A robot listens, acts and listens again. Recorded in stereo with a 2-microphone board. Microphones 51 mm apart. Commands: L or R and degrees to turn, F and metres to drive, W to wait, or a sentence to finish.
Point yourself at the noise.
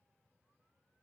W
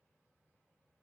W
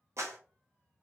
R60
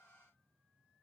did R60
W
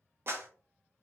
R50
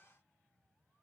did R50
W
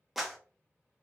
Facing the clap, under 1 m away.